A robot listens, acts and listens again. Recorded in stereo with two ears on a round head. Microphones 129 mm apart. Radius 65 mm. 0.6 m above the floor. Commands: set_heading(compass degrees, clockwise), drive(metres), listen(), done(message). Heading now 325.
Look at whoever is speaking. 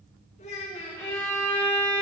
set_heading(280)
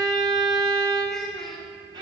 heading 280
done("Found it: a child speaking, straight ahead, over 4 m away.")